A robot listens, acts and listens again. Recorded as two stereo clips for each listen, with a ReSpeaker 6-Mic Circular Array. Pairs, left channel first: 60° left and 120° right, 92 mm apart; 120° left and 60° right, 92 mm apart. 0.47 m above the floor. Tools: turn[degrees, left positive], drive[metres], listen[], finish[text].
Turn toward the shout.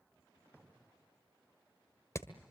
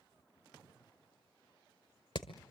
Action: listen[]
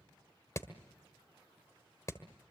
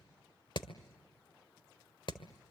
Action: listen[]
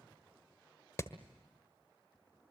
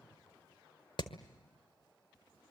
Action: finish[I can't make out a shout to turn to.]